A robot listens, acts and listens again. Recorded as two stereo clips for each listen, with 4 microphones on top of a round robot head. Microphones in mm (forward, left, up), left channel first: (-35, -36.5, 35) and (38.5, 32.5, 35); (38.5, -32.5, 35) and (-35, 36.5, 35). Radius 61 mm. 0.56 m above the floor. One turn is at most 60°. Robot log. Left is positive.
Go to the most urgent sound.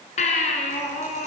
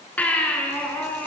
note: The baby crying: 120° right.
cmd yaw -60
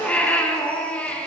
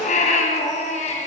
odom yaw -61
note: The baby crying is now 60° right.
cmd yaw -60
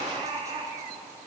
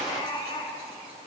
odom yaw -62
cmd fwd 1.0
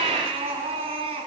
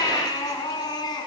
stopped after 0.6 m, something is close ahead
note: The baby crying is now 10° left.
cmd yaw +10
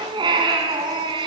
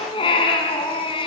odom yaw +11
end: Something is in my way. I am facing the baby crying but have not reached it.